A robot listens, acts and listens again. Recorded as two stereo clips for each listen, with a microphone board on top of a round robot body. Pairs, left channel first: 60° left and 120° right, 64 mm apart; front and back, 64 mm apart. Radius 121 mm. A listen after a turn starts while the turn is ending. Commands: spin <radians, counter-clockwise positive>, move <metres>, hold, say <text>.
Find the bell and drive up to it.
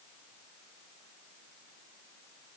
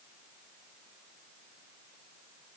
hold
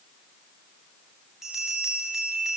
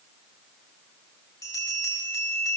spin -0.61
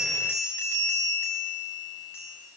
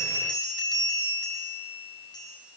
move 1.0
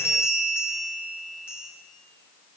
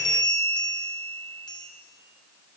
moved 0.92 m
move 1.0
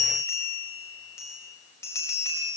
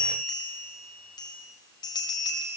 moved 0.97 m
spin 0.17
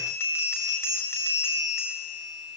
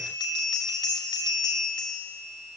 move 1.0
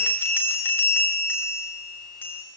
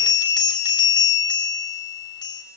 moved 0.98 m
move 1.0
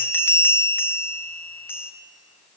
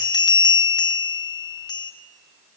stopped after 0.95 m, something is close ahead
say Arrived at the bell, straight ahead.